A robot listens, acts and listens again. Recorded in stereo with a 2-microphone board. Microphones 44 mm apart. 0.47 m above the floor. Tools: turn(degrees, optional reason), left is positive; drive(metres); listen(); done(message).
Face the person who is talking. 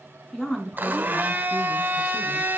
turn(degrees=30)
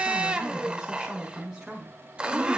turn(degrees=-20, reason="So it is at 20° right.")
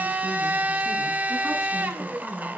done("Found it: a woman speaking, straight ahead, over 4 m away.")